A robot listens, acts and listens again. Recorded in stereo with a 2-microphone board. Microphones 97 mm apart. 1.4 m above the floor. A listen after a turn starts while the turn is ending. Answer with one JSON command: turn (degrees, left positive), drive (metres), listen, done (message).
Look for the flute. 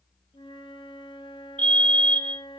{"turn": 55}
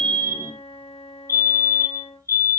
{"turn": 70}
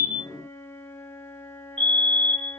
{"turn": 25}
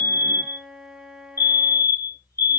{"done": "Found it: a flute, straight ahead."}